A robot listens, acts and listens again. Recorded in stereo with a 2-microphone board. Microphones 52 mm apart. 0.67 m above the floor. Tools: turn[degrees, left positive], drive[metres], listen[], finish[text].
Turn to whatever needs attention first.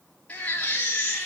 Thought: The baby crying: about 25° left or 155° left.
Action: turn[25]
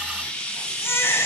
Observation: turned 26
Thought: So it is at 130° left.
Action: turn[130]
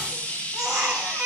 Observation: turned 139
Thought: The baby crying is now 10° right.
Action: turn[-10]
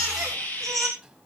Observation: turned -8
Action: finish[Found it: a baby crying, straight ahead.]